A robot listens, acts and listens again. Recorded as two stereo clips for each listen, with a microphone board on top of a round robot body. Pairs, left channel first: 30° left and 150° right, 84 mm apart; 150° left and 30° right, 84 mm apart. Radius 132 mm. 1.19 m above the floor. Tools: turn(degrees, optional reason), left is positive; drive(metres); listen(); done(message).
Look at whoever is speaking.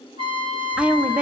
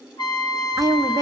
turn(degrees=-75, reason="The woman speaking: 75° right.")
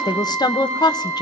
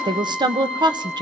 done("Found it: a woman speaking, straight ahead.")